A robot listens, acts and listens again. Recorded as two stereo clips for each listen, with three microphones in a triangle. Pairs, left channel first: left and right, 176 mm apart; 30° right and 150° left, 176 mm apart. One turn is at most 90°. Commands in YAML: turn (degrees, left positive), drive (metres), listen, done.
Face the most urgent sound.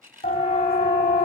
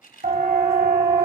turn: 90
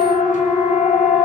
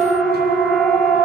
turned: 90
turn: 55
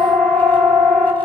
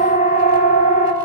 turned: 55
turn: 10
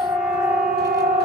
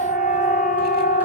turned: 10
done: "Found it: a siren, straight ahead."